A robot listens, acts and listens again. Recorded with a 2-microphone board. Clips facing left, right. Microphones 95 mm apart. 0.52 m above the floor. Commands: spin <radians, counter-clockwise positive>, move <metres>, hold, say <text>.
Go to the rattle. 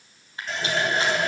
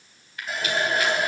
spin 0.52
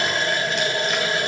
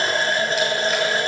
hold
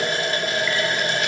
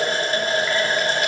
hold
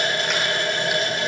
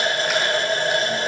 say I heard a rattle, but can't make it out now. It was about straight ahead or 120° left. I did not reach it.